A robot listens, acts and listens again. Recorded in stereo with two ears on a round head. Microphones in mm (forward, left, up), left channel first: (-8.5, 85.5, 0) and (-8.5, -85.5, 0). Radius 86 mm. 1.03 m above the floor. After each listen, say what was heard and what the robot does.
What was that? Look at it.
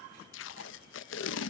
The tape being pulled: about 70° left or 110° left. Turn 70° left.
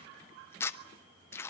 So it is at 15° left. Turn 15° left.
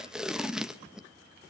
Facing the tape being pulled.